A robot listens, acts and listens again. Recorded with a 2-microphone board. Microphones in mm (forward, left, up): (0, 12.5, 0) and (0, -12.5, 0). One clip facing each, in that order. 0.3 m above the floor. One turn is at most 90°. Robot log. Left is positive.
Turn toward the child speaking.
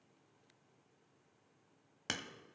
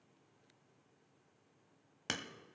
cmd idle
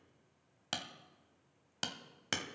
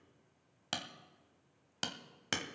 cmd idle
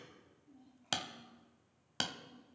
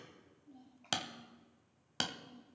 note: The child speaking: about 75° right or 105° right.
cmd yaw -75
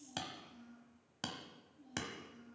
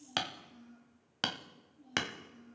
end: Found it: a child speaking, straight ahead, over 4 m away.